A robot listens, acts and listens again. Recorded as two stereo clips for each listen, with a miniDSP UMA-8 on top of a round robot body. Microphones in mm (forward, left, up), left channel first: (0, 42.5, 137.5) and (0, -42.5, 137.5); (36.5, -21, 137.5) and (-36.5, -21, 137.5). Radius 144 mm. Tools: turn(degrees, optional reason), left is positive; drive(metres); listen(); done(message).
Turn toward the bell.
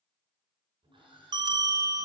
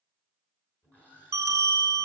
turn(degrees=-125, reason="The bell: 125° right.")
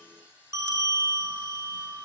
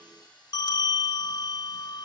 turn(degrees=-30, reason="The bell is now 30° right.")
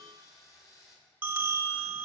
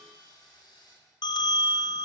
turn(degrees=-15, reason="The bell is now 15° right.")
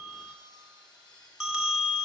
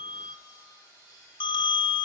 done("Found it: a bell, straight ahead.")